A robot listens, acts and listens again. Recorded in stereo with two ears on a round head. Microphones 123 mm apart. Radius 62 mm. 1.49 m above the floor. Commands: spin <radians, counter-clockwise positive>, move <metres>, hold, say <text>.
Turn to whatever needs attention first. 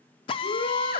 spin 1.57
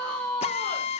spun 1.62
spin 0.17
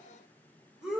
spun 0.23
say Found it: a shout, straight ahead.